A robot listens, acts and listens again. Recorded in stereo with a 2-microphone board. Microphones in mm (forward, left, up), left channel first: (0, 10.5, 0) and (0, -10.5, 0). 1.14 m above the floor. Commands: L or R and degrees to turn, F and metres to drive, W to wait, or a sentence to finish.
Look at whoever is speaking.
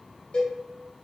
W
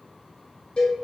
W
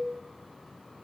I can't make out anyone speaking, only a cowbell.